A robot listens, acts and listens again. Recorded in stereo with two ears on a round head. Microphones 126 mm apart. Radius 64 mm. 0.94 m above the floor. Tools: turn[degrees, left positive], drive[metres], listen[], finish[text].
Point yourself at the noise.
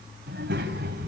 Action: turn[-90]
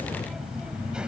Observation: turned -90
Thought: So it is at 10° right.
Action: turn[-10]
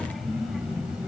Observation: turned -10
Action: finish[Found it: a child speaking, straight ahead, 2 to 4 m away.]